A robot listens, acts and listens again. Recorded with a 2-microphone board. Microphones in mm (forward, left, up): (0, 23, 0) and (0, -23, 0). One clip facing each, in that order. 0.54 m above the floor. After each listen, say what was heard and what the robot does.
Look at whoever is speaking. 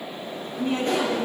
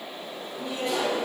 The woman speaking: about 50° left or 130° left. Turn 50° left.
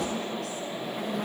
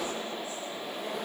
Keep listening.
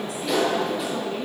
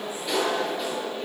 Keep listening.
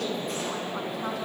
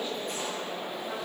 I heard a woman speaking, but can't make it out now. It was about straight ahead or 80° left.